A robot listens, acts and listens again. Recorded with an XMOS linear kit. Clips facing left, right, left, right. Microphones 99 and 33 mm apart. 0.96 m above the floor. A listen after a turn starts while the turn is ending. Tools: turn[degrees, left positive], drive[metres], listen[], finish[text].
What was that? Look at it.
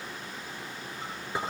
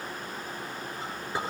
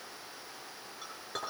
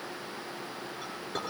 Action: turn[30]
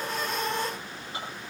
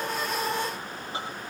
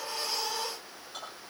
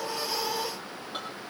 Thought: So it is at 25° right.
Action: turn[-25]
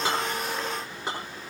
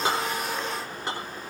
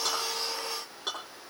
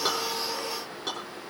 Action: finish[Found it: a clink, straight ahead.]